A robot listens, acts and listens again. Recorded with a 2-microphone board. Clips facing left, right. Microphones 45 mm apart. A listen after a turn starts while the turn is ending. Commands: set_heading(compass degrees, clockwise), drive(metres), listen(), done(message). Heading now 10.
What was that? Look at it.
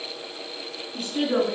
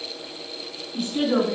set_heading(45)
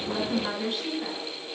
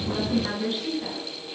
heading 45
done("Found it: a woman speaking, straight ahead, over 4 m away.")